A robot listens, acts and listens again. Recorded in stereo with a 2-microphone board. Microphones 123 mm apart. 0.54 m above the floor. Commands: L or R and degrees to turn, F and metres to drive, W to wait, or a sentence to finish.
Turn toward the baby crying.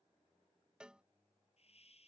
W
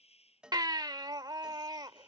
R35
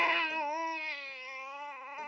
Facing the baby crying.